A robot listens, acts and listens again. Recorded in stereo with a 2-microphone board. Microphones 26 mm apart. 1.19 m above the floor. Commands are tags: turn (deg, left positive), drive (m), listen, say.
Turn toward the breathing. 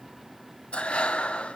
<turn deg="50"/>
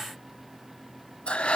<turn deg="65"/>
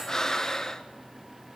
<turn deg="25"/>
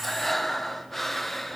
<turn deg="10"/>
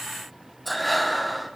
<say>Found it: breathing, straight ahead.</say>